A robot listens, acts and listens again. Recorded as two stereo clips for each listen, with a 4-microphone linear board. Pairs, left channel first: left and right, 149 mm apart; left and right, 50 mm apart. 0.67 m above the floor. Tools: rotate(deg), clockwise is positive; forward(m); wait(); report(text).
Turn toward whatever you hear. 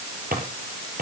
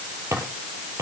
rotate(90)
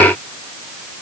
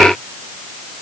wait()
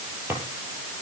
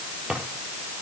rotate(15)
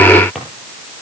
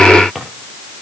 report("Facing the drawer.")